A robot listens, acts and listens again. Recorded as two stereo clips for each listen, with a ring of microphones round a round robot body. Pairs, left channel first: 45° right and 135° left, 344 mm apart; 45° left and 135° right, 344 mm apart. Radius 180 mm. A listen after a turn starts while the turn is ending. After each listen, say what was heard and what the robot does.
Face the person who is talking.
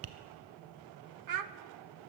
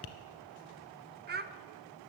The child speaking: 165° left. Turn 165° left.
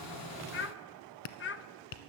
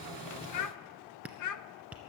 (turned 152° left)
The child speaking is now 10° left. Turn 10° left.
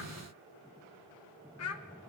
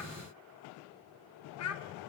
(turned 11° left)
Facing the child speaking, under 1 m away.